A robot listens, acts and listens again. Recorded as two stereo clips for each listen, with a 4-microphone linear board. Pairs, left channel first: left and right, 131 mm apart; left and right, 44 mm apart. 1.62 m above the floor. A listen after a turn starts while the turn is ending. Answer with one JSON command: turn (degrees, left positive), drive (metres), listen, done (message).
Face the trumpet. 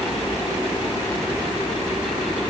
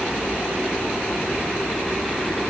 {"listen": true}
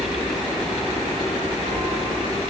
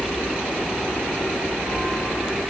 {"listen": true}
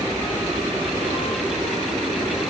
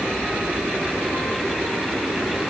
{"done": "I can't make out a trumpet."}